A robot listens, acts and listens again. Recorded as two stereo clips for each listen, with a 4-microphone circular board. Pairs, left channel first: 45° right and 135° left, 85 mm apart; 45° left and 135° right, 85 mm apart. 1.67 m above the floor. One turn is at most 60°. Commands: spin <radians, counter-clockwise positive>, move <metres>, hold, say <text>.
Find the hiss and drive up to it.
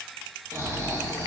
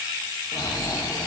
hold
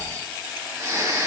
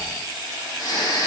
hold
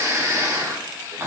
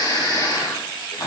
say I can't make out a hiss, only snoring.